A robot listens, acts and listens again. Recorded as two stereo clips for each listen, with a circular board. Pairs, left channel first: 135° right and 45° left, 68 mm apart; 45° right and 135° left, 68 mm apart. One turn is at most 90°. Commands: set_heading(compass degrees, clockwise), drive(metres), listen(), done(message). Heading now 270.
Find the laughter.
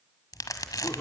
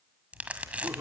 set_heading(0)
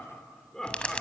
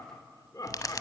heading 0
set_heading(50)
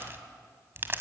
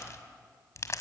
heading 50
listen()
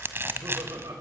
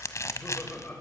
set_heading(30)
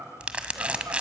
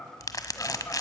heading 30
done("Found it: laughter, straight ahead, 2 to 4 m away.")